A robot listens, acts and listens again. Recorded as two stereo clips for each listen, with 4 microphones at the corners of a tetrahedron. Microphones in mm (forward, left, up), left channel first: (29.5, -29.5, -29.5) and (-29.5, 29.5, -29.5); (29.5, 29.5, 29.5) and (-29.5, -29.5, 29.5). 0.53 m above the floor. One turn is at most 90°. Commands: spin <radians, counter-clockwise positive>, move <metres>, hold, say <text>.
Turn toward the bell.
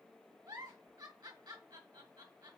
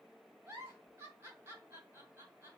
hold
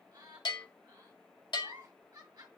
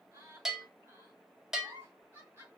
spin -0.87
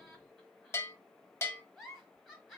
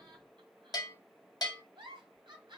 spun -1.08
spin 0.17
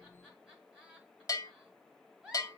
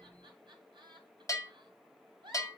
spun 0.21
say Facing the bell, under 1 m away.